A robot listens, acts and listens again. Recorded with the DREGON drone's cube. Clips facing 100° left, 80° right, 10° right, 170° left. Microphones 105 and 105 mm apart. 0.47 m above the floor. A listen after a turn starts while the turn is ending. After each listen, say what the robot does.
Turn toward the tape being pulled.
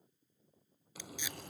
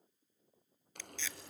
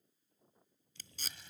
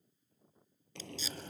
Turn 25° left.
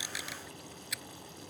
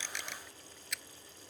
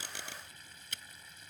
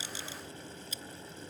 Turn 15° left.
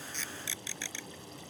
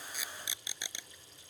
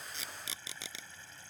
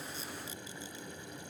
Found it: tape being pulled, straight ahead.